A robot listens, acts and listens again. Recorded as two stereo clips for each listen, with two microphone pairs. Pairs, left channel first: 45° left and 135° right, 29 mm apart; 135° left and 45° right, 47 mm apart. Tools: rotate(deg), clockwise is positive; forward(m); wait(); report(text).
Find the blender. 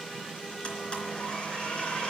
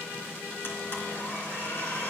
rotate(-100)
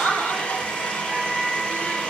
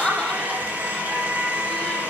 report("Facing the blender.")